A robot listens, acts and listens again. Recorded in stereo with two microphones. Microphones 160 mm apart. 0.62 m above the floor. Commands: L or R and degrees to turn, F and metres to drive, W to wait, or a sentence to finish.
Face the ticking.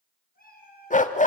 W
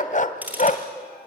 R30
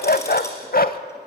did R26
W
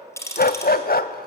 L15
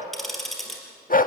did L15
Facing the ticking.